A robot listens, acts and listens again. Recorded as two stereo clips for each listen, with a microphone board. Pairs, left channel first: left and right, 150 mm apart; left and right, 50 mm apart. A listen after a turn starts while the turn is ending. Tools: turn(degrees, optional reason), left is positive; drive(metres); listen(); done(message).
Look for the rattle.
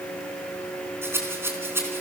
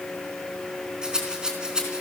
turn(degrees=-15, reason="The rattle: about 15° right or 165° right.")
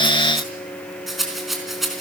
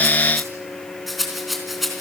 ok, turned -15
done("Facing the rattle.")